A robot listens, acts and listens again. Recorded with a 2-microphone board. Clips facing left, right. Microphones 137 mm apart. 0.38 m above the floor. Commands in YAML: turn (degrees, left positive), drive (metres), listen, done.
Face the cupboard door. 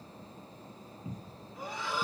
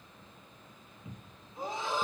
turn: 35
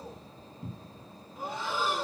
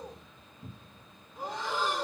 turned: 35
turn: 110
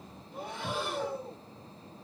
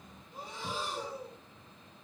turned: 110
listen: true
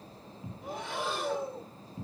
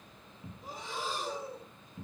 turn: 35
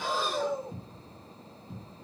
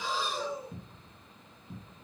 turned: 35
done: "Facing the cupboard door, 1 to 2 m away."